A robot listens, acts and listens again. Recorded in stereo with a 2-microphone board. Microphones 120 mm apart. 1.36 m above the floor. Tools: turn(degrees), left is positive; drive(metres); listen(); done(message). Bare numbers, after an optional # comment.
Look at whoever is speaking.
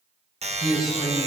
turn(30)
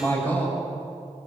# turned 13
# So it is at 165° left.
turn(165)
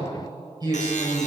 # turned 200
# The man speaking is now 35° right.
turn(-35)
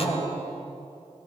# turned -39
done("Found it: a man speaking, straight ahead, over 4 m away.")